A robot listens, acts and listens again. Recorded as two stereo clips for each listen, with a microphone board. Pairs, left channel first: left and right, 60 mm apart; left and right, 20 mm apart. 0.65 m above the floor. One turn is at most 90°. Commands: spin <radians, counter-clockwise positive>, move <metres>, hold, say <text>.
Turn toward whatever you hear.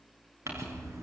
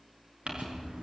spin -0.87
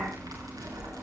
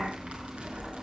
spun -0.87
spin -1.31
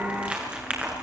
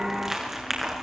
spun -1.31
spin -0.35
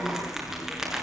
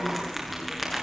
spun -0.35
say Found it: crumpling, straight ahead.